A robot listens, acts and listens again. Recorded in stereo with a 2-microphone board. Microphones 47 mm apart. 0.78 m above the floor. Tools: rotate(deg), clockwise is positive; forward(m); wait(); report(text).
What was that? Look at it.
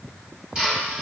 rotate(20)
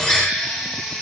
report("Found it: a drill, straight ahead, 2 to 4 m away.")